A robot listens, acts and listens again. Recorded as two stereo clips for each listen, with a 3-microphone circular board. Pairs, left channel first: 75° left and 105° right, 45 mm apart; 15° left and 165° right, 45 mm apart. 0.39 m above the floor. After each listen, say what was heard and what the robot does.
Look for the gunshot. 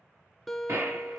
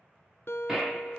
The gunshot: 85° right. Turn 85° right.
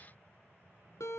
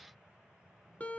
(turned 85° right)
I heard a gunshot from this way, but can't make it out now.